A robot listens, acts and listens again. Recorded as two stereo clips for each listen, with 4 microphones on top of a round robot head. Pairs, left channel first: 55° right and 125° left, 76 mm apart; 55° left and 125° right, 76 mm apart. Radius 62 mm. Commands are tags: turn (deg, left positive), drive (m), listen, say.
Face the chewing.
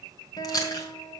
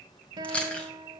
<turn deg="-15"/>
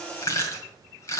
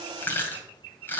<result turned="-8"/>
<say>Found it: chewing, straight ahead.</say>